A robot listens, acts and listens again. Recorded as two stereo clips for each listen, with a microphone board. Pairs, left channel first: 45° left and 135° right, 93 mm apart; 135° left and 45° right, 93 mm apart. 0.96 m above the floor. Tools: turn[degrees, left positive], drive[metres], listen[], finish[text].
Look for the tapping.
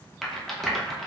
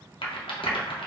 Action: listen[]
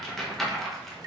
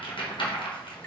Thought: The tapping: 160° right.
Action: turn[-160]
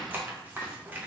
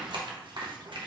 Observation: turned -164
Action: listen[]
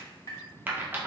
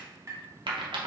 Action: finish[Found it: tapping, straight ahead, 1 to 2 m away.]